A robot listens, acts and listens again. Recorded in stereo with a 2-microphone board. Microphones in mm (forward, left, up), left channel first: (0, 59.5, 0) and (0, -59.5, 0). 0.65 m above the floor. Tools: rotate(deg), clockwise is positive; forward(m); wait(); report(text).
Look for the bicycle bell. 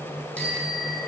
rotate(-30)
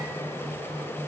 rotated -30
wait()
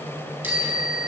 rotate(15)
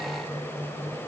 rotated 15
wait()
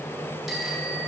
report("Facing the bicycle bell, over 4 m away.")